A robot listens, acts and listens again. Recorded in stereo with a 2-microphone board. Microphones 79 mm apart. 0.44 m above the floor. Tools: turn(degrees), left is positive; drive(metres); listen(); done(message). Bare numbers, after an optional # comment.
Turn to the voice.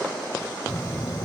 # The child speaking: about 50° left or 130° left.
turn(50)
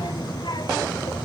# So it is at 75° left.
turn(75)
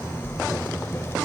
# The child speaking is now 35° left.
turn(35)
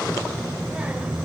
# The child speaking is now 15° right.
turn(-15)
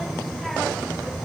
done("Found it: a child speaking, straight ahead.")